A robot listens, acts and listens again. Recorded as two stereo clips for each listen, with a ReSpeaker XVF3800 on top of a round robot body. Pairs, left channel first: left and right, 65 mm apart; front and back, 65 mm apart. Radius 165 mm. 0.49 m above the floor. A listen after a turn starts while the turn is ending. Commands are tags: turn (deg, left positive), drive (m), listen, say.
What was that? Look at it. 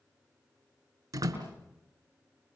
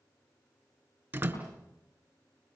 <turn deg="-115"/>
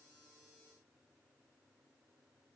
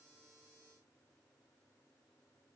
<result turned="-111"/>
<say>Facing where the door slam came from. I can't hear it now.</say>